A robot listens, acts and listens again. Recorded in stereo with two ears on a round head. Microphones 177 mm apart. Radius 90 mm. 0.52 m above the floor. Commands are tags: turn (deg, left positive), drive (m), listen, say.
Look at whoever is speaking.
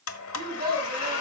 <turn deg="-20"/>
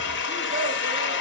<listen/>
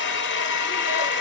<listen/>
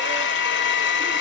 <say>I heard a child speaking, but can't make it out now. It was about straight ahead or 140° right.</say>